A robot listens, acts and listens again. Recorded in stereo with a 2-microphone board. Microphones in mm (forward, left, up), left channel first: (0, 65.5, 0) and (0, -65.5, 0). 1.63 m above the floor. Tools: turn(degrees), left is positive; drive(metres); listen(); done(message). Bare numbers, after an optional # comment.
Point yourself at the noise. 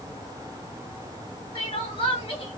# The crying: about 40° left or 140° left.
turn(40)
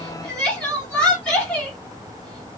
# So it is at 10° left.
turn(10)
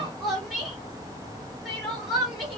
done("Found it: crying, straight ahead, 1 to 2 m away.")